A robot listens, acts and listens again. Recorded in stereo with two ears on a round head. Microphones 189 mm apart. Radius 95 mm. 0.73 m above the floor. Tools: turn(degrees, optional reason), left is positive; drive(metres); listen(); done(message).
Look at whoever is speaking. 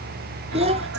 turn(degrees=-30, reason="The child speaking: about 30° right or 150° right.")
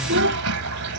turn(degrees=-120, reason="So it is at 120° right.")
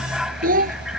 turn(degrees=-40, reason="The child speaking is now 40° right.")
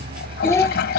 turn(degrees=15, reason="The child speaking is now 15° left.")
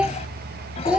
done("Facing the child speaking.")